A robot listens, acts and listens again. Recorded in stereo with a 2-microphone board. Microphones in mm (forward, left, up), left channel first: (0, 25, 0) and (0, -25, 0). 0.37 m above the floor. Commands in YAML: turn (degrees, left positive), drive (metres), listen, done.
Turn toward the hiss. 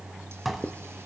listen: true
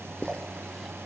listen: true
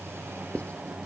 done: "I can't make out a hiss, only dishes clattering and writing."